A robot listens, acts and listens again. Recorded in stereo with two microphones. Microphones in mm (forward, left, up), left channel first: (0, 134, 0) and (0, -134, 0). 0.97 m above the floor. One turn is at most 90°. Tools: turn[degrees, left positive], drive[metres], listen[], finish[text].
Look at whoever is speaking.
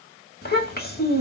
Thought: The child speaking: about 35° left or 145° left.
Action: turn[35]
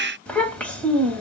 Action: finish[Found it: a child speaking, straight ahead, 1 to 2 m away.]